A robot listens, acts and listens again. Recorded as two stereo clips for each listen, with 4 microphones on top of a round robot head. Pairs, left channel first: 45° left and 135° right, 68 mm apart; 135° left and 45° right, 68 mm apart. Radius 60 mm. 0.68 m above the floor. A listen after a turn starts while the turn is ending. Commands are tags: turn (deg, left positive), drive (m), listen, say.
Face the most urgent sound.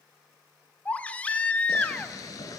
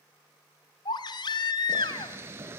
<turn deg="120"/>
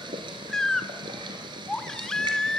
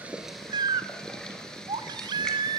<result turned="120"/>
<turn deg="-35"/>
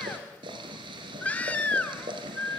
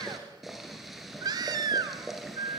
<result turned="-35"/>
<turn deg="-20"/>
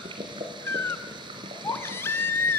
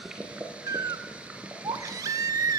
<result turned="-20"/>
<turn deg="-10"/>
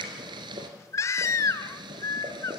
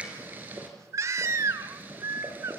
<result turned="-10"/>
<say>Facing the baby crying, under 1 m away.</say>